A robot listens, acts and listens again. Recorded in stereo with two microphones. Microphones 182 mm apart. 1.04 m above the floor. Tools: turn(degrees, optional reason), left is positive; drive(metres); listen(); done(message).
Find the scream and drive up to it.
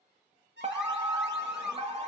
turn(degrees=-30)
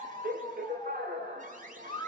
turn(degrees=25, reason="So it is at 25° left.")
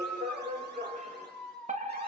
drive(metres=1.0)
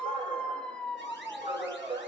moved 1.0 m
drive(metres=1.0)
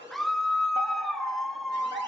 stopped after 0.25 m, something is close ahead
done("Arrived at the scream, straight ahead.")